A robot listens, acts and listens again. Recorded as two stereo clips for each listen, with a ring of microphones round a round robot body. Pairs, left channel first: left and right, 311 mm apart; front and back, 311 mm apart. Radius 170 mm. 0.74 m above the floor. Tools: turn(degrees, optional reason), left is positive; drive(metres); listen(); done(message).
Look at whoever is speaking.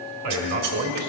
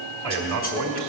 turn(degrees=-130, reason="The man speaking: 130° right.")
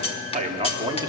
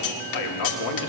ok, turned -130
turn(degrees=-10, reason="The man speaking is now 10° right.")
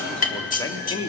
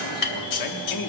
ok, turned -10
turn(degrees=20, reason="The man speaking is now 20° left.")
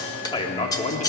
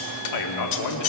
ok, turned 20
turn(degrees=25, reason="The man speaking is now 25° left.")
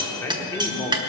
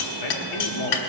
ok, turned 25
turn(degrees=10, reason="The man speaking is now 10° left.")
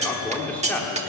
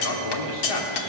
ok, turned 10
done("Found it: a man speaking, straight ahead, 1 to 2 m away.")